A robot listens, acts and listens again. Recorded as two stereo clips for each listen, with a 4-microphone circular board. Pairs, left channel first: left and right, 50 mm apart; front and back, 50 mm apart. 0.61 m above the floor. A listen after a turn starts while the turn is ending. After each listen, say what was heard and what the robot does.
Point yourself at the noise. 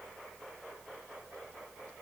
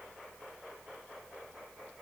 Keep listening.
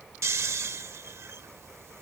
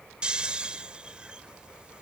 The snoring: 110° right. Turn 110° right.
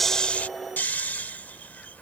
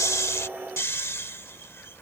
The snoring is now 35° left. Turn 35° left.
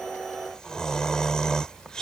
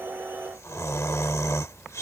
The snoring is now 15° left. Turn 15° left.
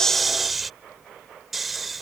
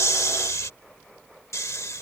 Found it: snoring, straight ahead.